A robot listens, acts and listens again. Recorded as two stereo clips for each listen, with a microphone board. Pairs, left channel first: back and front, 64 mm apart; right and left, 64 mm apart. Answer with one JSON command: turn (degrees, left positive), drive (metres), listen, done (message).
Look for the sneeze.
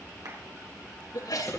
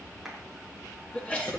{"turn": -160}
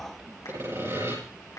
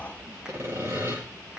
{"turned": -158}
{"done": "I heard a sneeze from this way, but can't make it out now."}